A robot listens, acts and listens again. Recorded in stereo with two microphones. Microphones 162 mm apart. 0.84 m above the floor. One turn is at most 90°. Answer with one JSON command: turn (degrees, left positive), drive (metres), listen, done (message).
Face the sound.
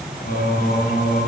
{"turn": 90}
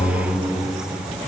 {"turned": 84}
{"turn": 10}
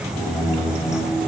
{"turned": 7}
{"turn": 20}
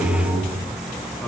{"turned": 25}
{"turn": 10}
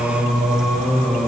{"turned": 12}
{"done": "Facing the singing."}